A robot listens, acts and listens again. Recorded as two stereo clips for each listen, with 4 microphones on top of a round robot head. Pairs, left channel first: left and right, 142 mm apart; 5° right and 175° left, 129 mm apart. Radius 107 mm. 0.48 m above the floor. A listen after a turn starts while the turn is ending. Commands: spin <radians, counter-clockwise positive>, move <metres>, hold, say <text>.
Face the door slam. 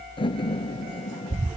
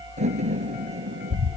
spin 2.53
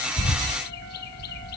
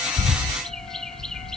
say Facing where the door slam came from. I can't hear it now.